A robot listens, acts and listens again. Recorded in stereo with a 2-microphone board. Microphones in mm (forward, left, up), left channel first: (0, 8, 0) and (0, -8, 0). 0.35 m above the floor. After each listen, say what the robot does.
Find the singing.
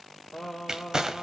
Turn 25° left.
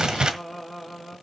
Facing the singing, over 4 m away.